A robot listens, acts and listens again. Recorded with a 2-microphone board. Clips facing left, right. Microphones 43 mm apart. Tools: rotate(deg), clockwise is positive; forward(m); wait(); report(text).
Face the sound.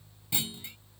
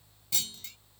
rotate(-20)
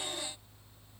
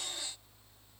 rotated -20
wait()
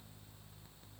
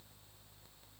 report("I heard a clunk, but can't make it out now. It was about straight ahead or 140° left.")